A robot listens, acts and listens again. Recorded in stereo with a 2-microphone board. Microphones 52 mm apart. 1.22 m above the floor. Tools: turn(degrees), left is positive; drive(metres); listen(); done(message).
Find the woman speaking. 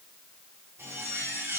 listen()
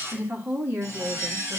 turn(degrees=-60)
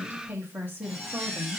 turn(degrees=-40)
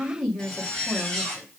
done("Found it: a woman speaking, straight ahead.")